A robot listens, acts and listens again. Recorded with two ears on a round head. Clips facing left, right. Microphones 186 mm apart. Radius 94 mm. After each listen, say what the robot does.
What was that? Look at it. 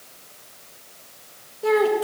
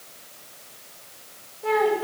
Turn 45° left.
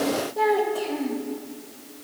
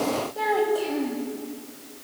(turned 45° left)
Found it: a child speaking, straight ahead, 2 to 4 m away.